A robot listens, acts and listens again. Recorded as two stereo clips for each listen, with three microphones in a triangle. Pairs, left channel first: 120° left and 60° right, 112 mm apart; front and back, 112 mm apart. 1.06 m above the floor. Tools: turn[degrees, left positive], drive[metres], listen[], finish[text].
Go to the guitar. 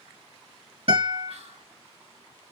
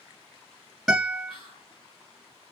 Thought: The guitar: 95° right.
Action: turn[-95]
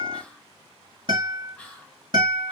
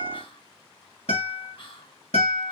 Thought: The guitar is now 15° right.
Action: turn[-15]
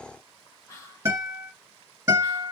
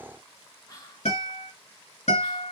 Action: drive[1.0]
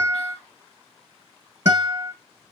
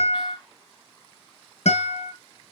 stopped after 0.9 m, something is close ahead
Action: finish[Arrived at the guitar, straight ahead.]